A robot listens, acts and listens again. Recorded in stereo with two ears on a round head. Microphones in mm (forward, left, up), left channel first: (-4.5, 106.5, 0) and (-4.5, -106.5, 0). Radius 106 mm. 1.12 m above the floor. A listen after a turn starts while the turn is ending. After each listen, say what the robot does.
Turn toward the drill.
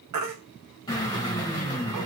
Turn 15° left.
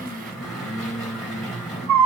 Facing the drill, 2 to 4 m away.